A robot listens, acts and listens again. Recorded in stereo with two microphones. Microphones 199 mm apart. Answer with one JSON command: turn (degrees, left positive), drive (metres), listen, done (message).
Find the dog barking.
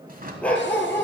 {"turn": 30}
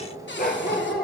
{"turn": 125}
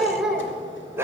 {"turn": -15}
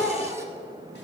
{"done": "Found it: a dog barking, straight ahead."}